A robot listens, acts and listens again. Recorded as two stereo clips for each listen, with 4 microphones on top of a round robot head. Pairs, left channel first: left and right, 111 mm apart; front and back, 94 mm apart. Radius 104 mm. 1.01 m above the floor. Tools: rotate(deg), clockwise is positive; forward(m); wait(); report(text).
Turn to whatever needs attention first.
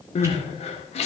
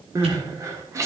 rotate(-120)
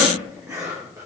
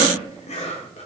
wait()
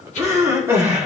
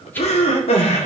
rotate(15)
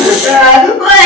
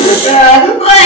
report("Facing the crying, 1 to 2 m away.")